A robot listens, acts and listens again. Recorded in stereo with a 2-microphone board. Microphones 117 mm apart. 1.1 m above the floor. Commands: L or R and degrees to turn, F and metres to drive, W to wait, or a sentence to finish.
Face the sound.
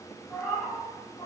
L20
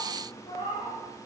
L130
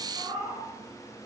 R65
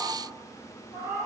R20
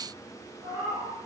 Found it: a cat meowing, straight ahead.